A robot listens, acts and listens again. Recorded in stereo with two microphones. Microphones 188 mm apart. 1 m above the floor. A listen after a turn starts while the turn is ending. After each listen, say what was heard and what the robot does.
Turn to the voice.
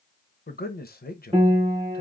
The man speaking: about 55° left or 125° left. Turn 55° left.
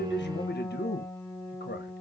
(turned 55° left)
So it is at 65° left. Turn 65° left.
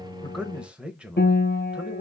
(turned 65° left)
Facing the man speaking, under 1 m away.